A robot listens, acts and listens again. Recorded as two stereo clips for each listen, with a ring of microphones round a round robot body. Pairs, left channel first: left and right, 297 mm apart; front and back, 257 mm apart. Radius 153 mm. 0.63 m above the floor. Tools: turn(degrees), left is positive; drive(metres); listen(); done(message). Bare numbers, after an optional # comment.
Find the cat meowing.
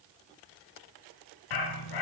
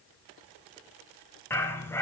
listen()
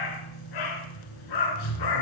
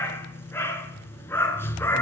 listen()
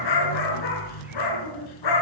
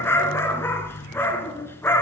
done("I can't make out a cat meowing to turn to.")